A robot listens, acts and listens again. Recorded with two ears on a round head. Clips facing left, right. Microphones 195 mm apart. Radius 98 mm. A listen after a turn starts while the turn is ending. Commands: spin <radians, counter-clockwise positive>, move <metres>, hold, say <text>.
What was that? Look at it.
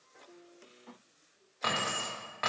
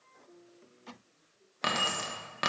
spin -0.79
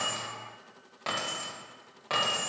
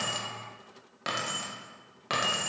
spin -0.52
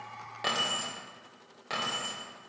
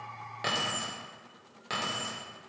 spin -0.17
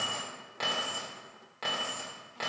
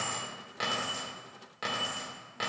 spin -0.17
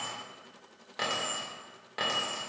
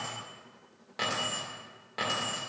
say Facing the keys jangling.